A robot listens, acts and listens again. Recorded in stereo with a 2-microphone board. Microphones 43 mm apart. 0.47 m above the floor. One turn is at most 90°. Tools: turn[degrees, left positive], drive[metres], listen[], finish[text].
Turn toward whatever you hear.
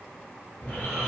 Thought: The snoring: about 50° left or 130° left.
Action: turn[50]
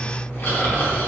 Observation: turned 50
Thought: So it is at 75° left.
Action: turn[75]
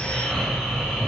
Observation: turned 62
Thought: The snoring is now 10° left.
Action: turn[10]
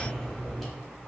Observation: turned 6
Action: finish[Facing the snoring, under 1 m away.]